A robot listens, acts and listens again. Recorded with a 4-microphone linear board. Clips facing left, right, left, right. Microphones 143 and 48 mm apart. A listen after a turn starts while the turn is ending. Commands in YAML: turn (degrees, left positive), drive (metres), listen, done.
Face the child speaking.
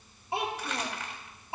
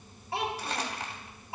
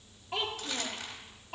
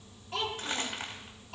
turn: 25
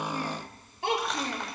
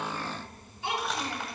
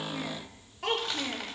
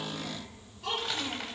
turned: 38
turn: 115
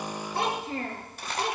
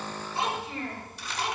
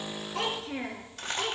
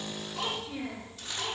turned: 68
turn: 40
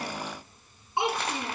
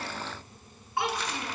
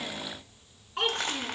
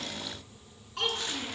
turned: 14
turn: 20
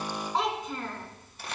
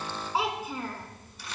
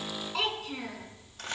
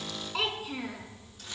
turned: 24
turn: -10
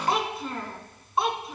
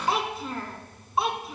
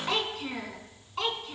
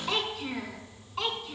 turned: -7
done: "Found it: a child speaking, straight ahead."